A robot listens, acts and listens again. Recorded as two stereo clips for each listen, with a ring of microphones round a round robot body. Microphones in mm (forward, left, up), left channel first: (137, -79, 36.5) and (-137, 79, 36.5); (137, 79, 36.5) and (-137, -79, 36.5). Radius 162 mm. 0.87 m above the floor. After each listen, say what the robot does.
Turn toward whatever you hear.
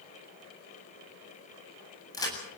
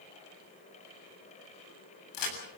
Turn 50° left.
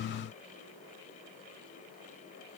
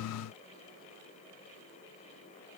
I heard a crack from this way, but can't make it out now.